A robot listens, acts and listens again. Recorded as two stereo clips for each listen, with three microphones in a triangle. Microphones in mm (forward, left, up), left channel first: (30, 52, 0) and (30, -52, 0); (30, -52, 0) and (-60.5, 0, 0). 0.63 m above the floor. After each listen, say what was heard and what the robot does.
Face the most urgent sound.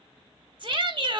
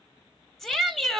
The shout: 120° right. Turn 120° right.
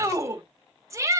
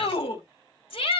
The shout is now 35° right. Turn 35° right.
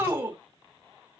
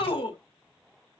The shout is now 20° right. Turn 20° right.
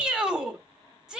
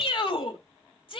The shout is now 10° right. Turn 10° right.
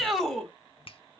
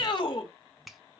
Facing the shout, 2 to 4 m away.